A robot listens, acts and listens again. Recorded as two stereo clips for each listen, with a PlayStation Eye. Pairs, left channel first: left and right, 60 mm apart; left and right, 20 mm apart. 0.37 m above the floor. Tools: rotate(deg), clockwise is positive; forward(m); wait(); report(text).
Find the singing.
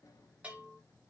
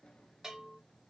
wait()
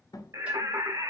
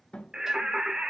rotate(65)
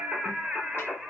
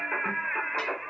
rotate(10)
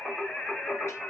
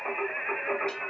rotate(-10)
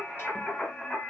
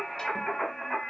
rotate(-10)
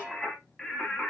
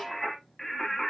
report("Facing the singing.")